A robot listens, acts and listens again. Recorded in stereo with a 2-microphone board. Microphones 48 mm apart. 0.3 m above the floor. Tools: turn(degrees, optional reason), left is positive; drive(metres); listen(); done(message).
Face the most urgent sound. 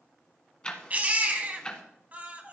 turn(degrees=-40, reason="The baby crying: about 40° right or 140° right.")
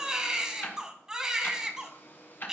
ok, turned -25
turn(degrees=-20, reason="So it is at 20° right.")
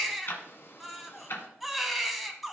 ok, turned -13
done("Facing the baby crying.")